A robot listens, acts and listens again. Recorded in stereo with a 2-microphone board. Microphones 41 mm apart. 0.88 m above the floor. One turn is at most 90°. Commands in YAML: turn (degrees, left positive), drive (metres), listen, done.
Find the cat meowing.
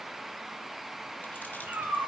turn: -70
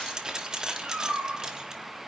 turn: -40
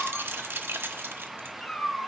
turn: 15
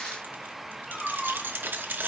done: "Found it: a cat meowing, straight ahead, 2 to 4 m away."